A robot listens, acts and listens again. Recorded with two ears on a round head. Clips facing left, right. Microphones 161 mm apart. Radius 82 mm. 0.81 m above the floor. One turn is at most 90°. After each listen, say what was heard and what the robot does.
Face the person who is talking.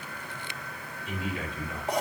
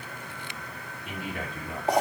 The man speaking: about 45° right or 135° right. Turn 45° right.
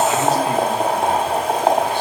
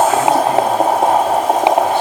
Keep listening.
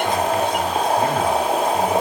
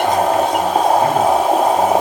Keep listening.
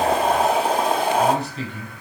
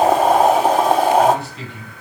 So it is at 35° left. Turn 35° left.
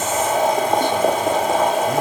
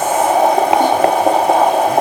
Keep listening.
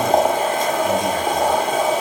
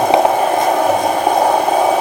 Keep listening.
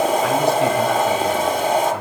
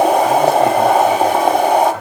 Facing where the man speaking came from. I can't hear it now.